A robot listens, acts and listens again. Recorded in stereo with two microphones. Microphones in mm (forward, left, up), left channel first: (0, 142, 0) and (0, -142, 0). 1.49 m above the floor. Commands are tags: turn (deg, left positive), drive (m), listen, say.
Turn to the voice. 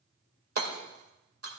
<listen/>
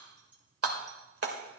<listen/>
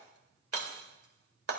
<say>I can't make out anyone speaking to turn to.</say>